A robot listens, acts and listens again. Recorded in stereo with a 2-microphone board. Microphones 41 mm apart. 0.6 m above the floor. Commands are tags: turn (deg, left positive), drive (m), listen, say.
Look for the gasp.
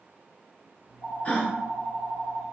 <turn deg="35"/>
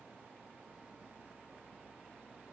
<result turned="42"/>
<listen/>
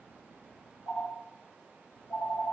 <say>I heard a gasp, but can't make it out now. It was about 10° right or 105° left.</say>